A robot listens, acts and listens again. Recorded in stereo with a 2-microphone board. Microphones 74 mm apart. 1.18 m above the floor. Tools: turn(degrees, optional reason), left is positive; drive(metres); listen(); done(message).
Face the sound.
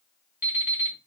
turn(degrees=-25, reason="The alarm clock: about 25° right or 155° right.")
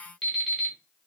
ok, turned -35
turn(degrees=10, reason="So it is at 10° left.")
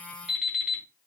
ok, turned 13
done("Found it: an alarm clock, straight ahead, 1 to 2 m away.")